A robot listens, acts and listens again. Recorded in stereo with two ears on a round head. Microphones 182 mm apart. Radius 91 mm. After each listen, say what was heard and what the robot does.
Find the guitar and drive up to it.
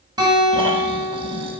The guitar: about 20° right or 160° right. Turn 20° right.
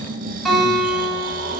Drive 1.0 m forward.
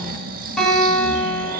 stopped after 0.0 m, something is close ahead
Something is in my way. I am facing the guitar but have not reached it.